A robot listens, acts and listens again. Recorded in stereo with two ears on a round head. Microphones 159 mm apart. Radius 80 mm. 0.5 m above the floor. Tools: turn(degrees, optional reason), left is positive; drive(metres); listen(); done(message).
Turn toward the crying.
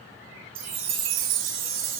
listen()
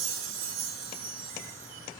listen()
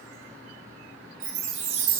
done("I can't make out crying, only a chime.")